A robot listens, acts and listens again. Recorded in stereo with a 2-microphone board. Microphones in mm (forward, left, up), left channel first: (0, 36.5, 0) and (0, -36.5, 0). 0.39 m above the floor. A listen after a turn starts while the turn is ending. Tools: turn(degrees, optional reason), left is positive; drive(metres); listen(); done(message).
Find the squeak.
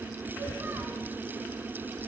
listen()
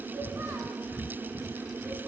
listen()
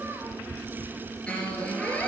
turn(degrees=30)
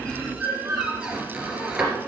turn(degrees=-15, reason="So it is at 15° right.")
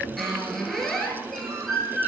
done("Facing the squeak, 2 to 4 m away.")